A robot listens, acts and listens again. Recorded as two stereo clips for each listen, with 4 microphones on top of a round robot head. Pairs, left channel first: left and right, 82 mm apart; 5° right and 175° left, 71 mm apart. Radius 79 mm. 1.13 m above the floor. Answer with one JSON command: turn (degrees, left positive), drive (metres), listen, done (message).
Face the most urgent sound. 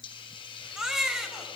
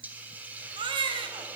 {"turn": -170}
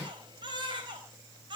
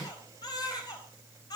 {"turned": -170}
{"turn": -45}
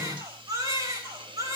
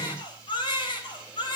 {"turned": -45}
{"turn": -30}
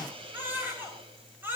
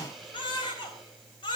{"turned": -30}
{"turn": -20}
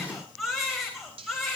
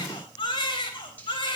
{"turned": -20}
{"done": "Facing the baby crying, over 4 m away."}